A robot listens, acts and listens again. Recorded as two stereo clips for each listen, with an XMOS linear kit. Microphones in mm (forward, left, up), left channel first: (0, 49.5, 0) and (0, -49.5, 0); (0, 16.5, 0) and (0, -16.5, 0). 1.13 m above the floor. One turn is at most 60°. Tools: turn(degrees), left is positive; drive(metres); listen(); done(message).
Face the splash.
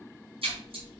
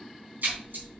turn(degrees=-60)
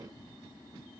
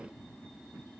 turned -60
turn(degrees=-30)
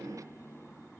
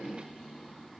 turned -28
done("I heard a splash from this way, but can't make it out now.")